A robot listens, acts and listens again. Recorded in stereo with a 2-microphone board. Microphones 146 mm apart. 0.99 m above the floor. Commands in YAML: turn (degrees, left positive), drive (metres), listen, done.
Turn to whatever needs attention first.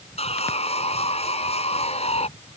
listen: true
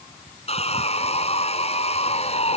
listen: true
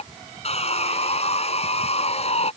done: "I can't make out anything urgent, only sawing."